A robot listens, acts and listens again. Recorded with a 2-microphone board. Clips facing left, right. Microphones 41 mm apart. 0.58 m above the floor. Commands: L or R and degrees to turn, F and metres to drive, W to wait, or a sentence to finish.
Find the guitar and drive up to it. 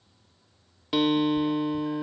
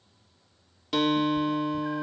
L30
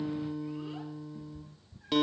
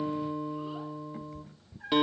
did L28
R15
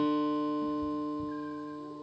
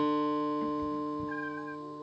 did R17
F1.0
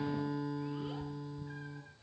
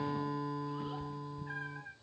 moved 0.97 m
F1.0
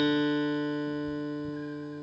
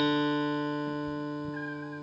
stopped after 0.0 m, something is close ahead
Arrived at the guitar, straight ahead.